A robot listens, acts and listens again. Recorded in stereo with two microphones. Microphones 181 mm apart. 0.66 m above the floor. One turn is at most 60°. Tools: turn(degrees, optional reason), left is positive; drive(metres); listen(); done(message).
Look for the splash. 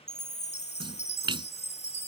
turn(degrees=-25, reason="The splash: about 25° right or 155° right.")
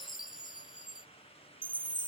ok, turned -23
listen()
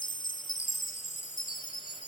done("I heard a splash, but can't make it out now. It was about 5° right or 130° right.")